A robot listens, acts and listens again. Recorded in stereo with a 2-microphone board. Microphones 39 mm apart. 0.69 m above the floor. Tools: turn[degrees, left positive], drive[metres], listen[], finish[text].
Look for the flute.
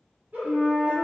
Thought: The flute: about 60° right or 120° right.
Action: turn[-60]
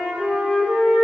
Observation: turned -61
Thought: So it is at 45° right.
Action: turn[-45]
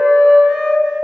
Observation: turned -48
Action: finish[Facing the flute.]